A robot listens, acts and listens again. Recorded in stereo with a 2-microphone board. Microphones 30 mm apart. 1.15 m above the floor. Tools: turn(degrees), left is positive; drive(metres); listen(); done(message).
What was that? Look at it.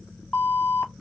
turn(degrees=65)
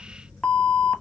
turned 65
turn(degrees=45)
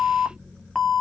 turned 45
turn(degrees=10)
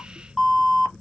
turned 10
done("Facing the alarm.")